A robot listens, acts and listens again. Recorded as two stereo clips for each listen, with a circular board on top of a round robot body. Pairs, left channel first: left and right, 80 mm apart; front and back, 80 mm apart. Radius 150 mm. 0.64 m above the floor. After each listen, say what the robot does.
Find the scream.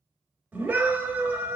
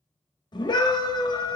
Turn 20° right.
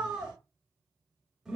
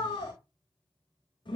Found it: a scream, straight ahead.